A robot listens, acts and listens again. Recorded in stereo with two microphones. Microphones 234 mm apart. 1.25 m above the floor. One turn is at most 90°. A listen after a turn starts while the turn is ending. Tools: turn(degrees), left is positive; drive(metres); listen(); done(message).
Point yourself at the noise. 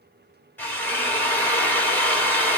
turn(degrees=30)
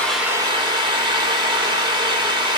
turn(degrees=-20)
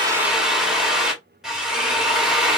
done("Facing the drill, 1 to 2 m away.")